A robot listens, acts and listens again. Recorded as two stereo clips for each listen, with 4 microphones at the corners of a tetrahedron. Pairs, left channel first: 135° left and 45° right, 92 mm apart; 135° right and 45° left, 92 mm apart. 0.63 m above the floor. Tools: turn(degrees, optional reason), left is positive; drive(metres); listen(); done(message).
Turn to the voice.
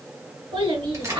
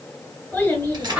turn(degrees=-60, reason="The child speaking: 60° right.")
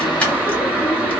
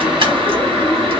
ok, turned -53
turn(degrees=-10, reason="Nothing new. It was at 10° right.")
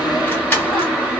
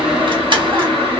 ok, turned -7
listen()
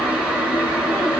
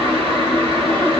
done("I heard a child speaking from this way, but can't make it out now.")